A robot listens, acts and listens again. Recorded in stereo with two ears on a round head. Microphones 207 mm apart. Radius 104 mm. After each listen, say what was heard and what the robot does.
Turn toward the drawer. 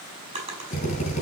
The drawer: about 25° right or 155° right. Turn 25° right.
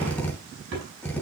So it is at 130° right. Turn 130° right.
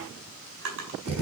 The drawer is now 55° right. Turn 55° right.
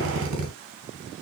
Keep listening.
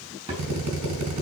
The drawer is now 25° right. Turn 25° right.
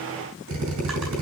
Keep listening.
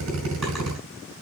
Keep listening.
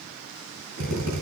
Facing where the drawer came from. I can't hear it now.